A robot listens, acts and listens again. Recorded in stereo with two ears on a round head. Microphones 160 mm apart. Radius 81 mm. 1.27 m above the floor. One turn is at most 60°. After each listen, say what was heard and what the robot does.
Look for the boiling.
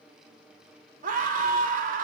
Keep listening.
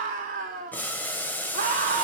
Turn 30° left.
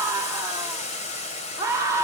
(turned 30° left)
So it is at 140° left. Turn 60° left.
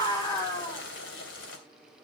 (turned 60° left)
The boiling is now 95° left. Turn 60° left.
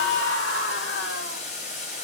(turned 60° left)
The boiling is now 40° left. Turn 40° left.
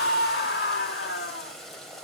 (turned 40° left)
Found it: boiling, straight ahead, 2 to 4 m away.